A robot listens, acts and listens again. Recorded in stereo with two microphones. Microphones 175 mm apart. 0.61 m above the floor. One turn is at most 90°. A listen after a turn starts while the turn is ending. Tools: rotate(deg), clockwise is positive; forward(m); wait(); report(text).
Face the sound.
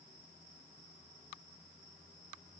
wait()
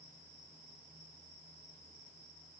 wait()
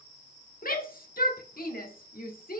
rotate(-55)
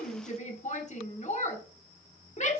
rotate(-50)
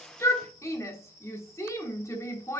rotate(-20)
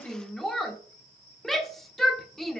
report("Found it: a shout, straight ahead.")